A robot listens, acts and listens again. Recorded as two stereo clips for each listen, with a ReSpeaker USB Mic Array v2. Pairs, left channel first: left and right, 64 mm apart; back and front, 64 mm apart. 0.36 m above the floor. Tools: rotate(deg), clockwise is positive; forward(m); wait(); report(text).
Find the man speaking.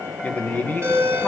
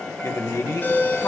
rotate(-150)
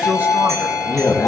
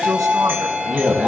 wait()
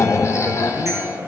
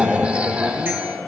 wait()
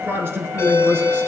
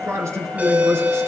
rotate(40)
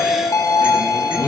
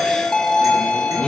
wait()
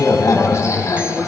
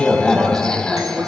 wait()
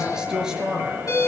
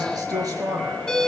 rotate(10)
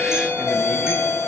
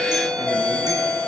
wait()
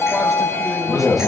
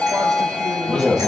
wait()
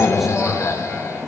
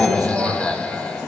report("Facing where the man speaking came from. I can't hear it now.")